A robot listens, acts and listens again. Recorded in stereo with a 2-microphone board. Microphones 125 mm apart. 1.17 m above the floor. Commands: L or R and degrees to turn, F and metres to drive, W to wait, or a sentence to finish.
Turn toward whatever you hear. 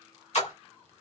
L60
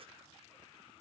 W
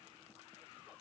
I heard a splash, but can't make it out now. It was about straight ahead or 60° left.